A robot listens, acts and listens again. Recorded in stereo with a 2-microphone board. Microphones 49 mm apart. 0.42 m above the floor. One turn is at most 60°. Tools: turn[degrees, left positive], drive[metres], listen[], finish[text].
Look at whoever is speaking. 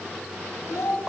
Action: turn[60]
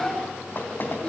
Thought: So it is at 25° left.
Action: turn[25]
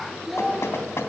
Action: finish[Found it: a child speaking, straight ahead, over 4 m away.]